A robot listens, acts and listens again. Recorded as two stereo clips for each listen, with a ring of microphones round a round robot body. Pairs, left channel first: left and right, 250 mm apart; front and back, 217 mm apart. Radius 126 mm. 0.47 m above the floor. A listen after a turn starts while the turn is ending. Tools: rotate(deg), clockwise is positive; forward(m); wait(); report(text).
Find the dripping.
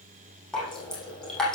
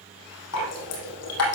report("Found it: dripping, straight ahead, over 4 m away.")